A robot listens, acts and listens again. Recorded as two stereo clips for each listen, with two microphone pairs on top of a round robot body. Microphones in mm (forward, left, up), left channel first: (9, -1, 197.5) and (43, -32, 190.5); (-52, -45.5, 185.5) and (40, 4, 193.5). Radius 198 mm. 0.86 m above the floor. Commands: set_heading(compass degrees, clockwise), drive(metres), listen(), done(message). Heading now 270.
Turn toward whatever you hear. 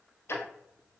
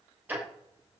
set_heading(165)
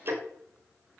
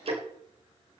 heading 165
done("Found it: ticking, straight ahead.")